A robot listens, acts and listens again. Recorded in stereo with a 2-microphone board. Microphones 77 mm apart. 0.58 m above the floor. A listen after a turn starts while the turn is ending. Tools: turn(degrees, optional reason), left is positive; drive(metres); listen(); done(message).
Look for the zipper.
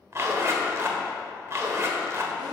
turn(degrees=-35, reason="The zipper: about 35° right or 145° right.")
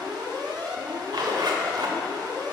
turn(degrees=-110, reason="So it is at 110° right.")
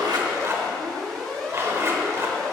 turn(degrees=-35, reason="The zipper is now 35° right.")
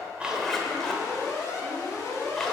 done("Facing the zipper.")